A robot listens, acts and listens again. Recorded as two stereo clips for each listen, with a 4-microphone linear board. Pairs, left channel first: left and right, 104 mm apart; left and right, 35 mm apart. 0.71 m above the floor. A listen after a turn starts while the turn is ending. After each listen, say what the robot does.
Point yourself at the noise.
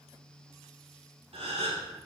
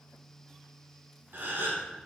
Turn 75° right.
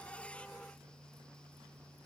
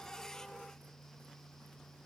Keep listening.
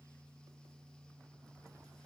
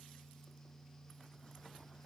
I heard a gasp, but can't make it out now. It was about straight ahead or 30° right.